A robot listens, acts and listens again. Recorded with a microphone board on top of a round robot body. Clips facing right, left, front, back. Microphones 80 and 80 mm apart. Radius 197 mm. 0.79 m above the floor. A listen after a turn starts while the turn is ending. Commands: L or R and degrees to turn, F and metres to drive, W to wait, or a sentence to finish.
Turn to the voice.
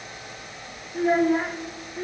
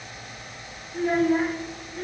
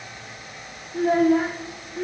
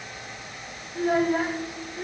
R10
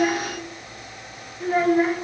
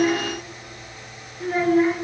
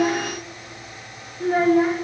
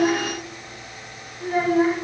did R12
Facing the child speaking, 1 to 2 m away.